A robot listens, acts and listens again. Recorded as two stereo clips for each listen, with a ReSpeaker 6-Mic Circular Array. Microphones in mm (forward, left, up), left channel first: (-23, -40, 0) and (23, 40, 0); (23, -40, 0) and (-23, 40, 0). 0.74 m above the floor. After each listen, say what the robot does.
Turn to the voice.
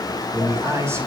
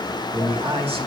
Turn 120° left.
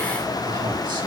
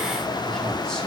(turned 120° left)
Keep listening.
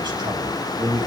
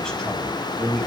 Turn 25° left.
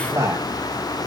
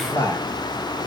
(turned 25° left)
Found it: a man speaking, straight ahead, over 4 m away.